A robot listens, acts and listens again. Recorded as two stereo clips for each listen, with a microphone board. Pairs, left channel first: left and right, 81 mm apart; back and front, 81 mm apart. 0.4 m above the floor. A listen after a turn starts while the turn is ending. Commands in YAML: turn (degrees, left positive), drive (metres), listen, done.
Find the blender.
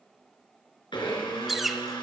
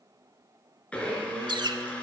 turn: 105
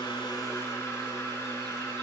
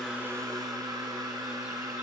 turn: 35
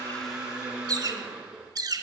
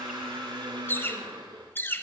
turn: -10
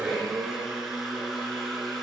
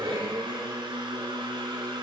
done: "Found it: a blender, straight ahead, 2 to 4 m away."